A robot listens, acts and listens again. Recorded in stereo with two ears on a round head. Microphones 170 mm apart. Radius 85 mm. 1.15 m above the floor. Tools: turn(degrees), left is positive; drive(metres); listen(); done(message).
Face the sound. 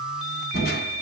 turn(degrees=55)
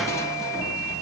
turn(degrees=20)
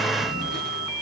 done("Found it: crushing, straight ahead.")